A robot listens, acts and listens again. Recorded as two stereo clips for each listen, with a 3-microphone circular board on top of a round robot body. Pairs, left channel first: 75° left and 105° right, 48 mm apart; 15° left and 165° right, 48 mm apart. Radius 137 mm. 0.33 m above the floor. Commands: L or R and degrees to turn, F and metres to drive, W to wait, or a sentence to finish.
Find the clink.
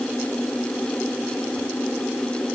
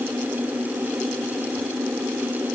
W
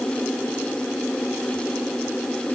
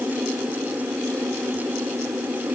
W
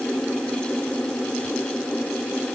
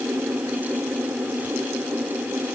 I can't make out a clink to turn to.